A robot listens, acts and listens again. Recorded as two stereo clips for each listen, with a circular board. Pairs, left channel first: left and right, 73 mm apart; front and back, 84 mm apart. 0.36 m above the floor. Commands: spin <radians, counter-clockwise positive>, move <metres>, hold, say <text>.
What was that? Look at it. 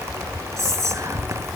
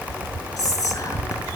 spin -0.87
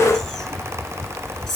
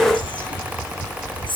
say Facing the whispering.